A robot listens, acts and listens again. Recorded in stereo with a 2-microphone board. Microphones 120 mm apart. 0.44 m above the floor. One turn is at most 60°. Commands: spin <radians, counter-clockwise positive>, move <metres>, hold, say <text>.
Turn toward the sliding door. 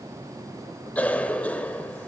hold
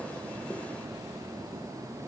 hold
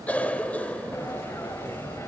spin 0.44
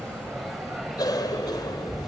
say Found it: a sliding door, straight ahead, 1 to 2 m away.